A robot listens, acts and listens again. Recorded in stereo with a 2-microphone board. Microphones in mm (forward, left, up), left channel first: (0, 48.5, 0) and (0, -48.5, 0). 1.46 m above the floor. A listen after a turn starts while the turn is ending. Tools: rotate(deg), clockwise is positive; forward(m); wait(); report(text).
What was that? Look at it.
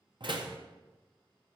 rotate(55)
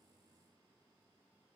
wait()
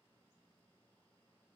report("I heard a door slam, but can't make it out now. It was about straight ahead or 70° right.")